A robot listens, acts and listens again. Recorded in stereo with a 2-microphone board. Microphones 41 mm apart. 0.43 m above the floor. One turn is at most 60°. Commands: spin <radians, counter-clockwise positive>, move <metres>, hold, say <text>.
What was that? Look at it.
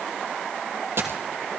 spin -1.05
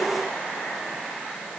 hold
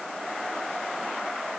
say I heard a dropped coin, but can't make it out now. It was about 10° right or 50° right.